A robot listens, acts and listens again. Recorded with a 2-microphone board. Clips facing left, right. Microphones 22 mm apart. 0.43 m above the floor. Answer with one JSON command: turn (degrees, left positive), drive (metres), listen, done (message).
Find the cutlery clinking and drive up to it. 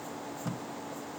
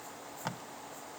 {"listen": true}
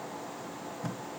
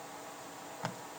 {"listen": true}
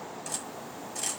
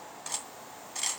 {"turn": -25}
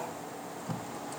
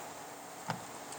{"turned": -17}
{"listen": true}
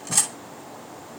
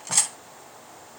{"turn": -10}
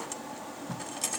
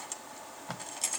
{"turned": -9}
{"drive": 1.0}
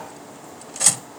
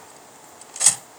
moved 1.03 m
{"drive": 1.0}
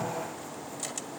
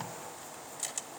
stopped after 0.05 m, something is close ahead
{"listen": true}
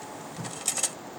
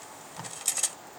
{"done": "Arrived at the cutlery clinking, straight ahead."}